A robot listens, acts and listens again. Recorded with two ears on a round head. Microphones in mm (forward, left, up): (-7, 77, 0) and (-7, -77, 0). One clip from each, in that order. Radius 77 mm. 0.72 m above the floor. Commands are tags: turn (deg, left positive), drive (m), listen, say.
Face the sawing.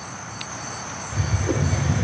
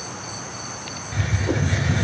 <listen/>
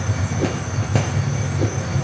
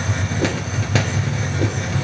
<listen/>
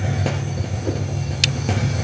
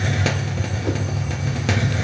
<say>I can't make out sawing to turn to.</say>